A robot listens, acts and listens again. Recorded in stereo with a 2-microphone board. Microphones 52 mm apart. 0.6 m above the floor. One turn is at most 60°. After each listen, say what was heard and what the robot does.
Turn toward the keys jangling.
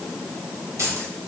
The keys jangling: about 75° right or 105° right. Turn 60° right.
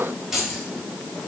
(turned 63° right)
Found it: keys jangling, straight ahead, 2 to 4 m away.